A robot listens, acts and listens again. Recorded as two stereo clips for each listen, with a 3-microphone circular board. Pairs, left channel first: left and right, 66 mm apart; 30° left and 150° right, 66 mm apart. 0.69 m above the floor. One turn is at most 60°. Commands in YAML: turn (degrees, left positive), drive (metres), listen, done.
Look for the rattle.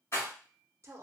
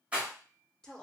turn: 60
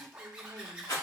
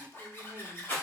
turn: 60
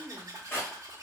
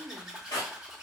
turn: 35
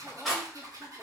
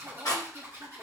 done: "Facing the rattle, 1 to 2 m away."